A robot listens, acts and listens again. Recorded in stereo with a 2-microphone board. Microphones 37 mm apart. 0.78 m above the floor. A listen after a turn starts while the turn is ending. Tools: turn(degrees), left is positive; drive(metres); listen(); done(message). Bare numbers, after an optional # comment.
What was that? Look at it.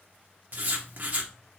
# The writing: about 50° right or 130° right.
turn(-50)
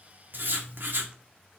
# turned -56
# So it is at 70° right.
turn(-70)
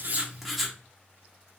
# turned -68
done("Facing the writing.")